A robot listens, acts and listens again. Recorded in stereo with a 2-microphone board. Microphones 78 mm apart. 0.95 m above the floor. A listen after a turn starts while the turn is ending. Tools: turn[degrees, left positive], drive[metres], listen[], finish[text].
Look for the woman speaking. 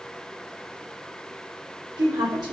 Thought: The woman speaking: about 65° right or 115° right.
Action: turn[-65]
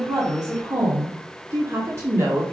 Thought: So it is at 35° right.
Action: turn[-35]
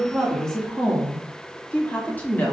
Thought: The woman speaking is now 20° left.
Action: turn[20]
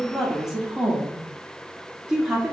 Action: finish[Facing the woman speaking.]